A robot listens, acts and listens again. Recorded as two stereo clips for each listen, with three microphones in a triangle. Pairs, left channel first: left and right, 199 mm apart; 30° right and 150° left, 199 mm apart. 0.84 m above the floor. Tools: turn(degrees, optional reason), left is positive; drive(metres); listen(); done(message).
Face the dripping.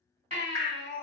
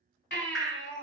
turn(degrees=-120, reason="The dripping: 120° right.")
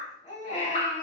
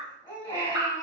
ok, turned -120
turn(degrees=-45, reason="The dripping is now 45° right.")
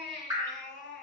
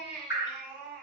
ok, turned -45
turn(degrees=-15, reason="The dripping is now 15° right.")
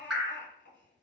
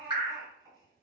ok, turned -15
done("Found it: dripping, straight ahead, under 1 m away.")